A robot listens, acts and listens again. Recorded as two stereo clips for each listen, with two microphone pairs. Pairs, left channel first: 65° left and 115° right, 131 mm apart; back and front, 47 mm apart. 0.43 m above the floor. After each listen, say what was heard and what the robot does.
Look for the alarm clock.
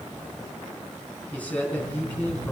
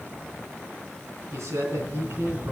The alarm clock: 55° right. Turn 55° right.
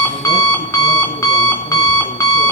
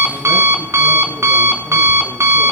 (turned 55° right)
Found it: an alarm clock, straight ahead.